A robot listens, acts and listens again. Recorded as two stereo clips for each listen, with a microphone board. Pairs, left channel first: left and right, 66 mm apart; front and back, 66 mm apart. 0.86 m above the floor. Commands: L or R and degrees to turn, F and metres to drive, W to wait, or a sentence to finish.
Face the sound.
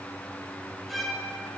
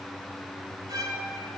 L180
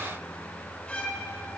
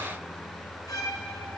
L15
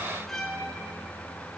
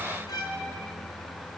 Facing the violin, 1 to 2 m away.